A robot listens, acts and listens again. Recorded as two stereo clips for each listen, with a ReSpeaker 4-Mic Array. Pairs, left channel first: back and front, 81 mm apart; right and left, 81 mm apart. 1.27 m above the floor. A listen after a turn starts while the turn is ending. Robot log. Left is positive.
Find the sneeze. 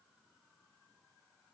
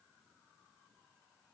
cmd idle
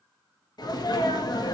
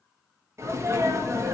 note: The sneeze: 145° left.
cmd yaw +145
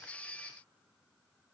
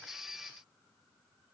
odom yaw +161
note: Nothing new. It was at 15° right.
cmd yaw -15
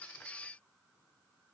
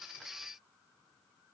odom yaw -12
end: I heard a sneeze from this way, but can't make it out now.